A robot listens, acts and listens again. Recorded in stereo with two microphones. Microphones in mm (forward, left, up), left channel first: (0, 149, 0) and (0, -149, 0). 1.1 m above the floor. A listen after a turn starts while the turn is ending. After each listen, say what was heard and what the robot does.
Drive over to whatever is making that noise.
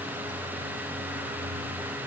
Keep listening.
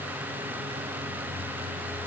Keep listening.
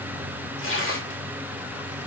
The tearing paper: about 45° left or 135° left. Turn 45° left.
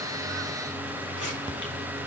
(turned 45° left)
Keep listening.
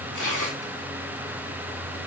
So it is at 95° left. Turn 95° left.
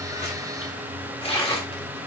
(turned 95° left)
The tearing paper is now 20° left. Turn 20° left.
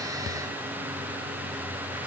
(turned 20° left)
Keep listening.
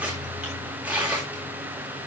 Drive 1.0 m forward.
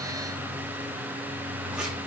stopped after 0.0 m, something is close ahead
Keep listening.
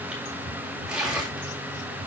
Blocked. The tearing paper is further on, straight ahead.